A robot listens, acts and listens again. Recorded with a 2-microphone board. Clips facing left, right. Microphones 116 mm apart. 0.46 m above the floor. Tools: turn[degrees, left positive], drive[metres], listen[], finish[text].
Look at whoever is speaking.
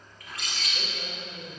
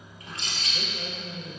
Action: turn[30]
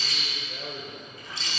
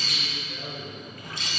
Thought: So it is at 150° left.
Action: turn[150]
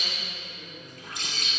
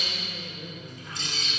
Thought: The man speaking is now 35° right.
Action: turn[-35]
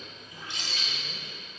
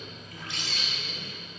Action: listen[]
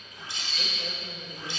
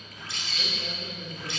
Thought: The man speaking is now 10° left.
Action: turn[10]
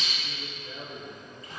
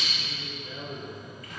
Action: finish[Found it: a man speaking, straight ahead, 1 to 2 m away.]